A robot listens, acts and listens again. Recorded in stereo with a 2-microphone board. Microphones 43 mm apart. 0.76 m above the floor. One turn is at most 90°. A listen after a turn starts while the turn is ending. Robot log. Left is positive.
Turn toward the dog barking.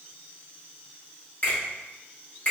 cmd idle
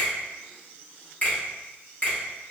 cmd idle
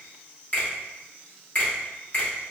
end: I can't make out a dog barking to turn to.